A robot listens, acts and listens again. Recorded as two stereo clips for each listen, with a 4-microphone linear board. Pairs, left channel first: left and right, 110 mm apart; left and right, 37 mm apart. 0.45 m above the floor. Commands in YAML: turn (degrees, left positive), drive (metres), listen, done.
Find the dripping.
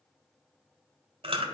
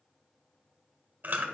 listen: true
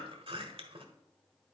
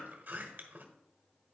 listen: true
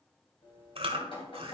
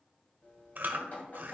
turn: 50
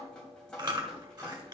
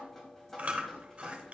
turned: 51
turn: 10
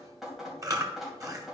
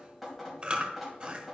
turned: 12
done: "Facing the dripping."